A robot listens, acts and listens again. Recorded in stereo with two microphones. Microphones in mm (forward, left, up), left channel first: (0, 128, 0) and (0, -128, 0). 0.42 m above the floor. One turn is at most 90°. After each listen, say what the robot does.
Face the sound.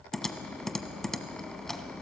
Turn 30° left.
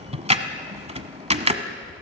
Turn 25° right.
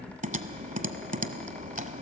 Turn 35° right.
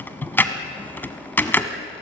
Turn 10° left.
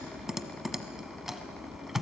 Found it: typing on a keyboard, straight ahead, 1 to 2 m away.